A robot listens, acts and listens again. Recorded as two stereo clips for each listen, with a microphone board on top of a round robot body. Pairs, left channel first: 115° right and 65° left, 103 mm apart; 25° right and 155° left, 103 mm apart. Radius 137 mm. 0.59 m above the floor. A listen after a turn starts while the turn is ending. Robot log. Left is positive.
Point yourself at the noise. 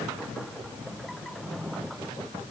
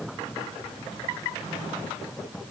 cmd idle
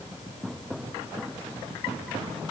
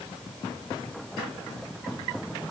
cmd idle
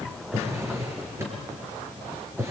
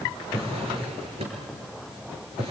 note: The drawer: 135° left.
cmd yaw +135
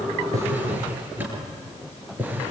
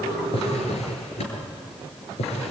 end: Facing the drawer.